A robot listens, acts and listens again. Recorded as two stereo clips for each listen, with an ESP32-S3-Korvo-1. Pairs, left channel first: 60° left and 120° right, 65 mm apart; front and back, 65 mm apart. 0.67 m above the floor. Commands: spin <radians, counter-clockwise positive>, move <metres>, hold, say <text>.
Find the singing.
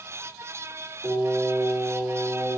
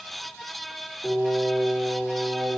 spin -1.57
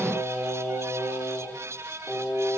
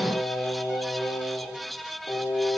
spin -0.26
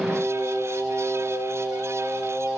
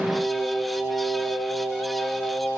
spin 0.26
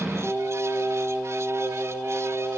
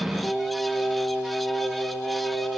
say Facing the singing.